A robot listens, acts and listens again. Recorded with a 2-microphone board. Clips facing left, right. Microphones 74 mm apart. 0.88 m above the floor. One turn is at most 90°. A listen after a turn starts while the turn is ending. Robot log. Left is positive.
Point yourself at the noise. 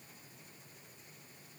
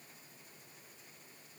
cmd idle
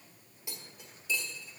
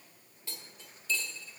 cmd yaw +30
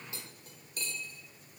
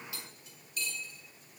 note: So it is at 140° left.
cmd yaw +90
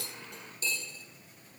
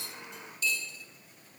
note: The cutlery clinking is now 40° left.
cmd yaw +40
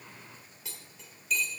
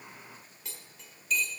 end: Facing the cutlery clinking, 1 to 2 m away.